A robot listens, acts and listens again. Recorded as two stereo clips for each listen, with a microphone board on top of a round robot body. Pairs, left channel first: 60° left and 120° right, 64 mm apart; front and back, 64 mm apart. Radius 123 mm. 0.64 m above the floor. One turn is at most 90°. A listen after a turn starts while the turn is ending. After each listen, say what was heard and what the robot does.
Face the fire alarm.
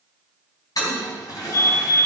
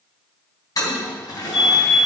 The fire alarm: 85° left. Turn 85° left.
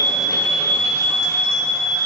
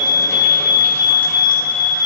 The fire alarm is now 15° right. Turn 15° right.
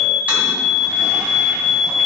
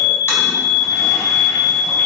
Found it: a fire alarm, straight ahead.